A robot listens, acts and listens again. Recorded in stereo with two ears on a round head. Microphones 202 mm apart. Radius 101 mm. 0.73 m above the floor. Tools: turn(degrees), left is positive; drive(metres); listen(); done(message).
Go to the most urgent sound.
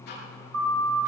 turn(degrees=-65)
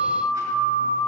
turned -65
drive(metres=1.0)
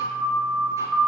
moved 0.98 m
drive(metres=1.0)
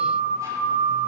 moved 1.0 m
drive(metres=1.0)
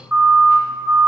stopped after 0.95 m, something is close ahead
turn(degrees=-10)
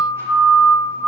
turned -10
done("Arrived at the siren, straight ahead.")